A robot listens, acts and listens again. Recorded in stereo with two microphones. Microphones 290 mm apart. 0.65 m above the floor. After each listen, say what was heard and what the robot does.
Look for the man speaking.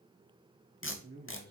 The man speaking: about 30° right or 150° right. Turn 30° right.
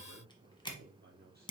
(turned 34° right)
The man speaking: about 30° right or 150° right. Turn 30° right.
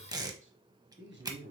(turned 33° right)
The man speaking: about 35° right or 145° right. Turn 35° right.
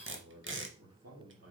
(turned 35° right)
So it is at 130° right. Turn 130° right.
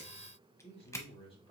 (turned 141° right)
The man speaking is now 20° left. Turn 20° left.
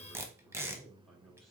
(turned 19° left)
Found it: a man speaking, straight ahead.